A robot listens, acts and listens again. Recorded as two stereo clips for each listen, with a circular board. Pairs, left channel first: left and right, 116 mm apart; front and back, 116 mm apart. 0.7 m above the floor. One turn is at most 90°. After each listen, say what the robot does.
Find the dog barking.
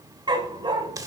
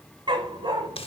Turn 90° right.
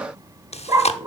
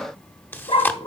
Turn 35° right.
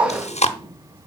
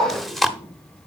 Turn 15° right.
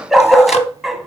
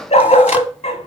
Facing the dog barking, 1 to 2 m away.